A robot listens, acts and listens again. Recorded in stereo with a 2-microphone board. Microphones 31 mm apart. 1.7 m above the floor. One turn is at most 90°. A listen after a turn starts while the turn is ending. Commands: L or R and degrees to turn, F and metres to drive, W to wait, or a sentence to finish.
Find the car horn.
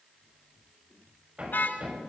L90
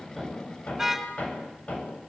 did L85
Facing the car horn.